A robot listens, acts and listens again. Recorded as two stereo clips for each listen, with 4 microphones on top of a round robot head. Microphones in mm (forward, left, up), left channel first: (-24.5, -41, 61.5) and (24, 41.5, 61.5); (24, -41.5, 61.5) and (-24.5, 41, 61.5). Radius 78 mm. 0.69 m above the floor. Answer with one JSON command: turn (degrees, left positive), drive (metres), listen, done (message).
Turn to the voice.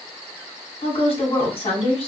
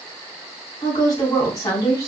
{"turn": -110}
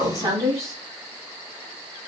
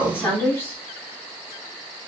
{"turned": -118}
{"turn": 10}
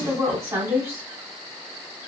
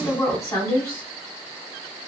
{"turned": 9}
{"done": "Found it: a woman speaking, straight ahead."}